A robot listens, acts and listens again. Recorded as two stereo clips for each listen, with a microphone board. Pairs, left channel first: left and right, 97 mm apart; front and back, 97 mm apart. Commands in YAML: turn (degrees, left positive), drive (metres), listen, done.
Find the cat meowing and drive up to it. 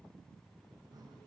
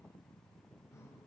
listen: true
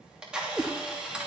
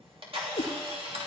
drive: 1.0
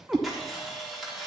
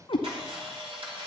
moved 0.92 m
turn: -10
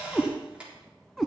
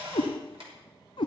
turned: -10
drive: 1.0
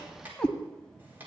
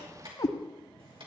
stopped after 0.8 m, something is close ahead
turn: 15
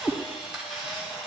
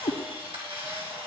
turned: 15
done: "Arrived at the cat meowing, straight ahead."